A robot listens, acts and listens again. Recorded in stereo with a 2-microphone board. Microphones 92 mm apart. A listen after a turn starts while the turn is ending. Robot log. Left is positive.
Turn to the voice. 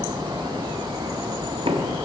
cmd idle
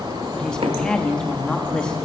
cmd yaw +30
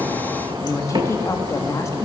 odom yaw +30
note: So it is at 140° left.
cmd yaw +140
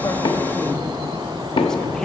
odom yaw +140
cmd idle
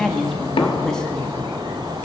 end: Facing the woman speaking.